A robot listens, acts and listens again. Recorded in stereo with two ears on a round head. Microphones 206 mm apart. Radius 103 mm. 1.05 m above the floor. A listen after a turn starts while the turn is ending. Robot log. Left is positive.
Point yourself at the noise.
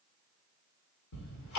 cmd yaw +90
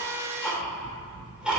end: Facing the ticking, 2 to 4 m away.